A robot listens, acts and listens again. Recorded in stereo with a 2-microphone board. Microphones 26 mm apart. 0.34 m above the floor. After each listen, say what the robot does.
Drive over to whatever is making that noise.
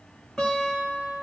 Turn 25° left.
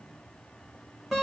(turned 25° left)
Drive 1.0 m forward.
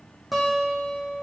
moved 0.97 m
Drive 1.0 m forward.
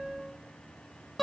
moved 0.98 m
Drive 1.0 m forward.
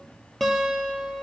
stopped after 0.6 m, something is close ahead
I am next to the guitar.